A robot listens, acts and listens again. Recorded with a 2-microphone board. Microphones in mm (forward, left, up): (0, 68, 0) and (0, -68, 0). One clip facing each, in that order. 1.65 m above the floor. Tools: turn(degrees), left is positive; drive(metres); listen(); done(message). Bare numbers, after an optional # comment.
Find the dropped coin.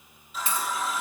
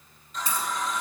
# The dropped coin: about 40° right or 140° right.
turn(-40)
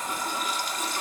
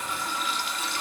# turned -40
listen()
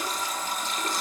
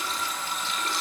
done("I heard a dropped coin, but can't make it out now. It was about straight ahead or 100° right.")